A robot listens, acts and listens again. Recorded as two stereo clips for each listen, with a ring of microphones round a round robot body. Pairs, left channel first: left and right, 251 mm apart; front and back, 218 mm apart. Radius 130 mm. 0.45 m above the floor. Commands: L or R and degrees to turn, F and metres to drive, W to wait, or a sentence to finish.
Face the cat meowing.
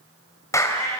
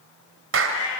L10
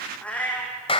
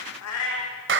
Found it: a cat meowing, straight ahead, over 4 m away.